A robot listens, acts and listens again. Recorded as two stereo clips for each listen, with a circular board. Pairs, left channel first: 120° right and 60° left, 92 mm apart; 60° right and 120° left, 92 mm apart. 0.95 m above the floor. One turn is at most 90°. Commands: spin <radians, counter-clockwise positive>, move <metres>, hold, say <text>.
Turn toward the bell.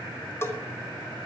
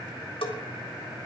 spin -1.05
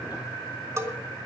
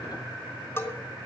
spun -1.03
say Facing the bell, 2 to 4 m away.